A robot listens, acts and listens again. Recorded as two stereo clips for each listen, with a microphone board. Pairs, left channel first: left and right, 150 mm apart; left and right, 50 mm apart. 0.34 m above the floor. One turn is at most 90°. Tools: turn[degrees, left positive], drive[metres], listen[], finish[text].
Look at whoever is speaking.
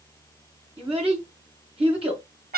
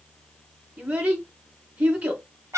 Thought: The child speaking: about 40° right or 140° right.
Action: turn[-40]
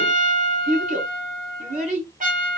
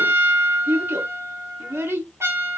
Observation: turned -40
Thought: So it is at 95° right.
Action: turn[-90]
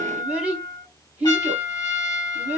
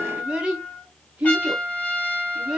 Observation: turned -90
Thought: The child speaking is now 10° right.
Action: turn[-10]
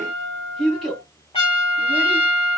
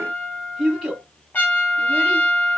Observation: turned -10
Action: finish[Facing the child speaking.]